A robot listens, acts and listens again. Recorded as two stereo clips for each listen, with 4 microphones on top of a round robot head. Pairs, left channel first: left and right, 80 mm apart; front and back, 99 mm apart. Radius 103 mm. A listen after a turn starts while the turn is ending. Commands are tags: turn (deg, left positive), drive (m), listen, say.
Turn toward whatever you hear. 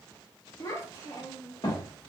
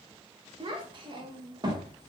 <turn deg="135"/>
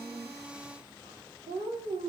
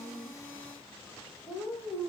<turn deg="-80"/>
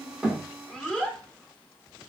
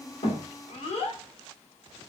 <turn deg="10"/>
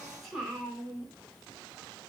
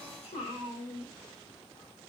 <say>Found it: a child speaking, straight ahead, 1 to 2 m away.</say>